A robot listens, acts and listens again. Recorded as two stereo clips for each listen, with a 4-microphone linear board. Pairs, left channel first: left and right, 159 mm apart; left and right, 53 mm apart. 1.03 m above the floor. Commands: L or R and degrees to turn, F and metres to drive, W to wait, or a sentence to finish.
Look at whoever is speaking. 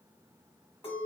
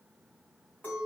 W
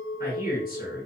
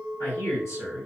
L65
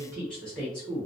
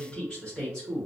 Found it: a man speaking, straight ahead.